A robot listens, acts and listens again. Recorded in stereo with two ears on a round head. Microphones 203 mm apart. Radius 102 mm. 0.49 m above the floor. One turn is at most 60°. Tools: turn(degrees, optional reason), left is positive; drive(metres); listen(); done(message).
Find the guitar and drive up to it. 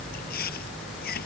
listen()
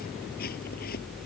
listen()
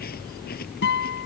turn(degrees=50, reason="The guitar: about 50° left or 130° left.")
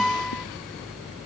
drive(metres=1.0)
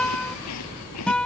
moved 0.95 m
drive(metres=1.0)
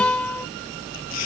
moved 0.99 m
drive(metres=1.0)
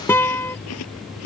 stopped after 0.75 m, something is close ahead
turn(degrees=15, reason="The guitar is now 15° left.")
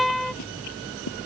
done("Arrived at the guitar, straight ahead.")